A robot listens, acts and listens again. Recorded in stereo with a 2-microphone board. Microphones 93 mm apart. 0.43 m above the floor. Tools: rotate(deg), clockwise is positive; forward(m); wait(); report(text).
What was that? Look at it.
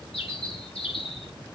rotate(-70)
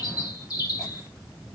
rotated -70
rotate(-40)
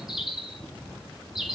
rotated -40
report("Facing the bird.")